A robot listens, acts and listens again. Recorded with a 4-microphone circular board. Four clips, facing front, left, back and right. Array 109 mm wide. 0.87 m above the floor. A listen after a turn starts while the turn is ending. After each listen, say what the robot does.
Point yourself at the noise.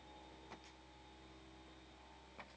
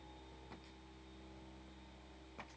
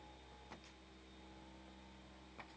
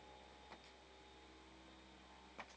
Keep listening.
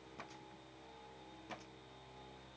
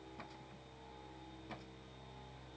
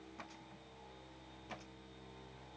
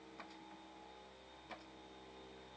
Keep listening.
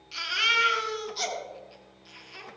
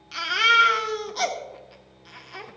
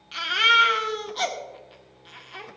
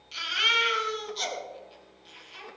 Turn 120° left.
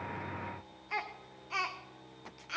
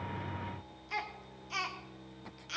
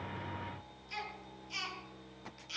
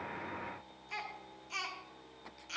Turn 15° left.
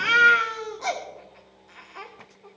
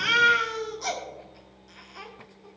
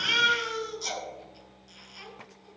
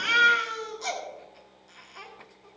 Facing the baby crying, 1 to 2 m away.